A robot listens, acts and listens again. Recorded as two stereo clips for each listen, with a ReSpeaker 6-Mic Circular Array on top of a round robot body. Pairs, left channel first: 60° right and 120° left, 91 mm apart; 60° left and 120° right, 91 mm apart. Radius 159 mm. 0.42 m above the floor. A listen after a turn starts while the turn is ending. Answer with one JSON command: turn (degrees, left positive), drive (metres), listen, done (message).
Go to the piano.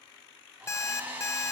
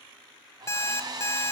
{"listen": true}
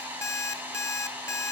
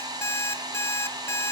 {"listen": true}
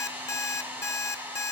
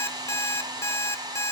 {"done": "I can't make out a piano, only an alarm clock and a hair dryer."}